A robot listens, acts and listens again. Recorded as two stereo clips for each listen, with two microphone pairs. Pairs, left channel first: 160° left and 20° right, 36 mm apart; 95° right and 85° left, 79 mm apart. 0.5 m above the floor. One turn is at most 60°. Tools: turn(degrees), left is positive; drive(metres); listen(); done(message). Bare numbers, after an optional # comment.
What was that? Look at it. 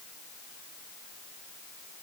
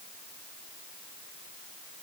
listen()
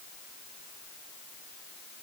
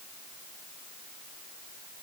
listen()
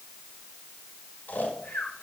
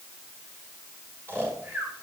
# The snoring: 140° left.
turn(60)
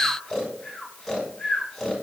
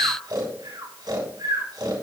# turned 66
# The snoring is now 75° left.
turn(60)
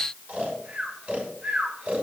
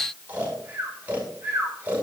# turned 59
# The snoring is now 15° left.
turn(15)
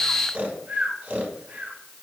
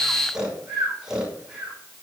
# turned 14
done("Facing the snoring, over 4 m away.")